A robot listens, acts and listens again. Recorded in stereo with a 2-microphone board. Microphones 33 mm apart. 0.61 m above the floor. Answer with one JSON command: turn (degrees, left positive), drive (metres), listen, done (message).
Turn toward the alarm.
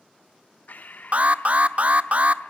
{"turn": -45}
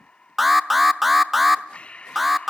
{"done": "Found it: an alarm, straight ahead, under 1 m away."}